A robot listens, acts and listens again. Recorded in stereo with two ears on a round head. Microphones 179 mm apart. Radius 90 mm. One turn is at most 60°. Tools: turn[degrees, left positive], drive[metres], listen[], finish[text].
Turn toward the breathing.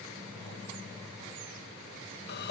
Action: listen[]
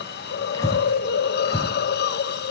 Thought: The breathing: about 15° left or 165° left.
Action: turn[15]
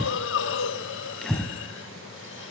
Action: finish[Facing the breathing, 2 to 4 m away.]